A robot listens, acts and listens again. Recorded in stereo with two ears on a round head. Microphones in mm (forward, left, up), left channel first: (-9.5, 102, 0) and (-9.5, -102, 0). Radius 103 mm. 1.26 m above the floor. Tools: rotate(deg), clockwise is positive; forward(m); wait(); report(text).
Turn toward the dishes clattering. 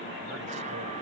wait()
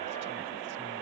wait()
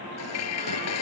rotate(-90)
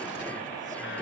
wait()
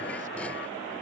wait()
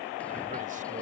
report("I heard dishes clattering from this way, but can't make it out now.")